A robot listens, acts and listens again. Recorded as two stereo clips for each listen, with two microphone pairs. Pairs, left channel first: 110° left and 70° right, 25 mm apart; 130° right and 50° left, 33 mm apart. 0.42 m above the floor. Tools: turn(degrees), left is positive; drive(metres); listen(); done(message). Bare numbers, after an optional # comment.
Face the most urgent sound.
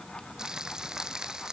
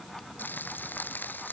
listen()
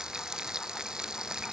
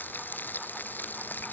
listen()
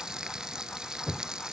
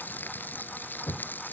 done("I can't make out anything urgent to turn to.")